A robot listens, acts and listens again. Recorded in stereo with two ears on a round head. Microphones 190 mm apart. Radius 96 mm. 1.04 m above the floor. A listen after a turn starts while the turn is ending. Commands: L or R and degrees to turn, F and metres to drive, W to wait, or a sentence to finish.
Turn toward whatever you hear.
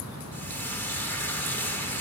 L30
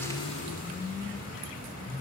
W
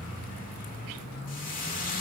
L140
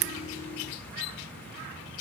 W
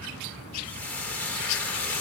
Found it: frying, straight ahead, 1 to 2 m away.